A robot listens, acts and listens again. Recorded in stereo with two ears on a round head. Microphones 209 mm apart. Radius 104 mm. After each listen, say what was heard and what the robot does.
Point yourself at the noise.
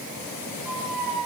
Turn 30° left.
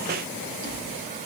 Keep listening.
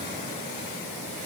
Keep listening.
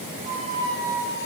So it is at 35° right. Turn 35° right.
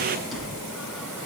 Facing the squeak.